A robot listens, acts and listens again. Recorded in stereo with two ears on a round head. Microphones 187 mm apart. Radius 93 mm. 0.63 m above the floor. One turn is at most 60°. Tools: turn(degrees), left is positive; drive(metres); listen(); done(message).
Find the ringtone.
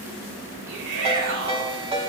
turn(degrees=-25)
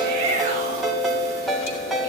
done("Found it: a ringtone, straight ahead.")